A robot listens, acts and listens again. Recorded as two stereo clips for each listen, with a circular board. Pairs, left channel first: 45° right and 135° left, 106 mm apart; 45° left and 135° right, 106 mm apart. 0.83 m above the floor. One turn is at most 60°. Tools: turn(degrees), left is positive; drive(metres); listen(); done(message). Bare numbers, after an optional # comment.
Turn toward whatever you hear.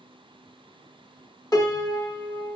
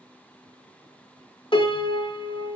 # The piano: 10° left.
turn(10)
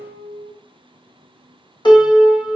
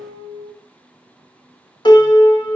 done("Found it: a piano, straight ahead.")